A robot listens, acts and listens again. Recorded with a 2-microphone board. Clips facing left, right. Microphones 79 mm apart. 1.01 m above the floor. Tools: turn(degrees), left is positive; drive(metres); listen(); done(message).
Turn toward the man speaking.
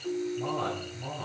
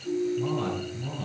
turn(degrees=25)
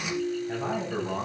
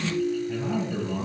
turn(degrees=125)
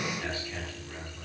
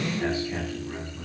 turn(degrees=-20)
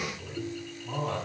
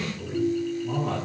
done("Facing the man speaking.")